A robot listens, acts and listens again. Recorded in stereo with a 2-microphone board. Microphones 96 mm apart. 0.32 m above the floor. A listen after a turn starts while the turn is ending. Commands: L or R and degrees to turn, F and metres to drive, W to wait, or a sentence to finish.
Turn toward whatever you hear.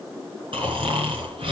R65
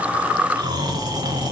R45
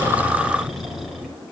Facing the snoring, over 4 m away.